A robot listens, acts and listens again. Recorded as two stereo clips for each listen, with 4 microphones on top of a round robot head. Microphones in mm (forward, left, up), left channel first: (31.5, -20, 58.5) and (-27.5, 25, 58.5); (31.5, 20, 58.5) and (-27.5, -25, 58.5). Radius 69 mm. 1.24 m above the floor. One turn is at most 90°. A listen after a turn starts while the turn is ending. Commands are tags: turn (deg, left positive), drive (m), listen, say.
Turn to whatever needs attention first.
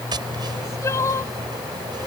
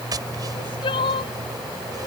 <turn deg="20"/>
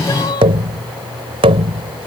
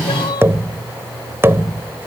<say>Facing the crying.</say>